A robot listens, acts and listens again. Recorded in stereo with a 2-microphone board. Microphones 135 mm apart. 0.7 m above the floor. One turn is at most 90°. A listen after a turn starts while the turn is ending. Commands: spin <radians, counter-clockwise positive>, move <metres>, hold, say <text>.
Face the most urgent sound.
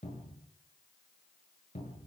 hold
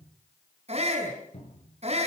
spin -0.87
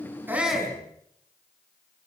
say Found it: a shout, straight ahead, over 4 m away.